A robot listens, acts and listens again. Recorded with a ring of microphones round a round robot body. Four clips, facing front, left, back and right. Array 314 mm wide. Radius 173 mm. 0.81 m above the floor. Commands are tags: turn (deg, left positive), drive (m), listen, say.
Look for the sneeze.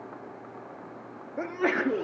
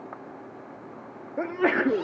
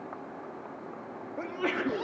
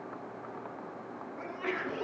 <turn deg="75"/>
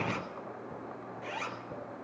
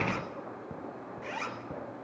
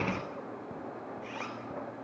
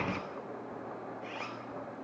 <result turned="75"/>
<say>I heard a sneeze from this way, but can't make it out now.</say>